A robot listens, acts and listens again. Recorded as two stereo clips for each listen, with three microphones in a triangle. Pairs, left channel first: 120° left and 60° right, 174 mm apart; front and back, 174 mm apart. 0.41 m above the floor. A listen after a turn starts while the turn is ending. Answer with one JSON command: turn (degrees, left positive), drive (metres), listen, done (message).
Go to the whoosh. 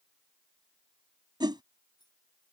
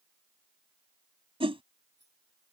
{"turn": -125}
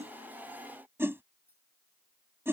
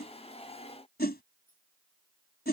{"turn": 15}
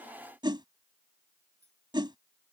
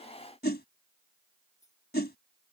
{"drive": 1.0}
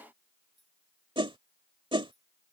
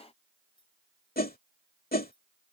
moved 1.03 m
{"drive": 1.0}
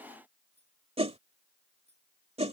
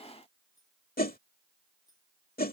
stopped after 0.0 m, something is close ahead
{"turn": -10}
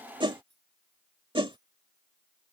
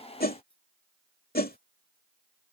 {"done": "I am next to the whoosh."}